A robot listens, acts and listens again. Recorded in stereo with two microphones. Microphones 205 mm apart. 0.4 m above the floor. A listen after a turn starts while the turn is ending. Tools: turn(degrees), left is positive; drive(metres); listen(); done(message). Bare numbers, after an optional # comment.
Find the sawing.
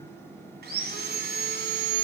# The sawing: about 50° right or 130° right.
turn(-50)
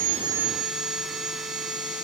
done("Facing the sawing, 1 to 2 m away.")